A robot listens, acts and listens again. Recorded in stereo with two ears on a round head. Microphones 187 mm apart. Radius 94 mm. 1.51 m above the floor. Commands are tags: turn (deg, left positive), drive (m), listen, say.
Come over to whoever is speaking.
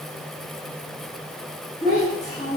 <turn deg="35"/>
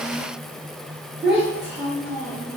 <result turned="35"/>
<drive m="1.0"/>
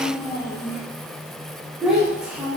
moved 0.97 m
<drive m="1.0"/>
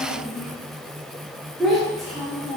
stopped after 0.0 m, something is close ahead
<say>I am next to the child speaking.</say>